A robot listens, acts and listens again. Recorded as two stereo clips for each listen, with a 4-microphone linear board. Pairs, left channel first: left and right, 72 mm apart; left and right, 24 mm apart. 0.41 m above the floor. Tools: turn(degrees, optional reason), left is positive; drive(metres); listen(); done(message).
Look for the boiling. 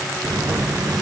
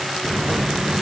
turn(degrees=-65, reason="The boiling: about 65° right or 115° right.")
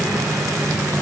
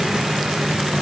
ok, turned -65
turn(degrees=-50, reason="So it is at 50° right.")
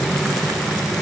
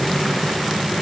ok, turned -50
done("Facing the boiling.")